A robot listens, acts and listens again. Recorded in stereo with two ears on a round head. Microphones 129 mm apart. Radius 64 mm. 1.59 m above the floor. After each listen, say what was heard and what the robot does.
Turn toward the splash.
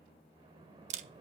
The splash: about 35° right or 145° right. Turn 35° right.
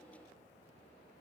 Keep listening.
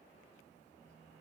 I heard a splash, but can't make it out now. It was about straight ahead or 110° right.